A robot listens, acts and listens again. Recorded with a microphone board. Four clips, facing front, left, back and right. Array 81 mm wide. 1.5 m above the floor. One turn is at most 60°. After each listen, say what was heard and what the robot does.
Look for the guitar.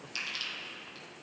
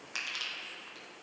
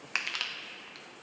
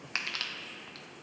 Keep listening.
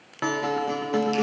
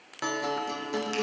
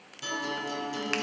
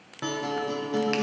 The guitar: 15° left. Turn 15° left.
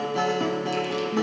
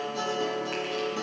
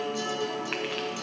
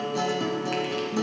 Facing the guitar, under 1 m away.